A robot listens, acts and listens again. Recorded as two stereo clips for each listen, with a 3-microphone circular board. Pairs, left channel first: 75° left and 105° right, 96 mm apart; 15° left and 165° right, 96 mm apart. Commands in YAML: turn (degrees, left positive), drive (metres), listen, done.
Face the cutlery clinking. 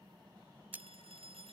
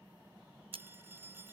turn: -175
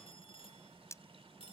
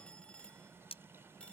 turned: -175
turn: 15
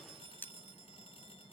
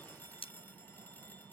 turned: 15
done: "Facing the cutlery clinking."